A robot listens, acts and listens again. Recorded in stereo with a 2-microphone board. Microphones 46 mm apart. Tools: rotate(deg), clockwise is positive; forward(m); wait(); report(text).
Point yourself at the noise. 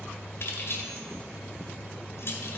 rotate(-55)
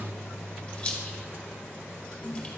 rotate(-25)
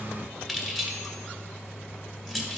report("Facing the keys jangling, 1 to 2 m away.")